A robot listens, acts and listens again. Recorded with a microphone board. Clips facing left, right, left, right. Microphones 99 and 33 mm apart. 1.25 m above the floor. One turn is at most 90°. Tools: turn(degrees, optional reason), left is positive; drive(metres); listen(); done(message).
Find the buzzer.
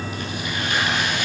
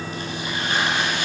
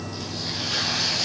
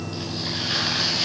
listen()
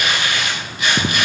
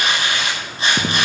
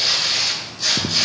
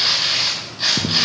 listen()
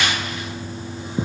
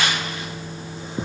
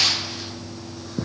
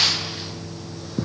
done("I can't make out a buzzer, only tearing paper.")